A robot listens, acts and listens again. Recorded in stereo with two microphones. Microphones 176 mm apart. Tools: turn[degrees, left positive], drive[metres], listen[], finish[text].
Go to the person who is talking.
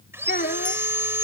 Thought: The child speaking: about 60° left or 120° left.
Action: turn[60]
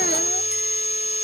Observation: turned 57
Action: listen[]
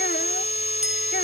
Action: listen[]
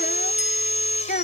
Thought: So it is at 60° left.
Action: turn[60]
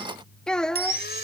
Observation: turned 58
Action: drive[1.0]
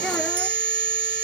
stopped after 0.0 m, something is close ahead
Action: listen[]
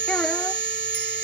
Action: listen[]
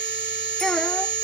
Action: finish[I heard a child speaking from this way, but can't make it out now. I did not reach it.]